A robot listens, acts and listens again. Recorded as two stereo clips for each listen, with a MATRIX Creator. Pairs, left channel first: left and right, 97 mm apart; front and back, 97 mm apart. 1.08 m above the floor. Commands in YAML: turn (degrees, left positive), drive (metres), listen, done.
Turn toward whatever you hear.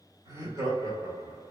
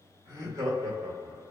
turn: -150
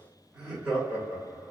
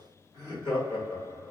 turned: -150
turn: -20
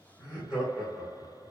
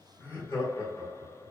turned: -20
turn: -15
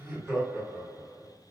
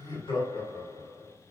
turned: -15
done: "Found it: laughter, straight ahead."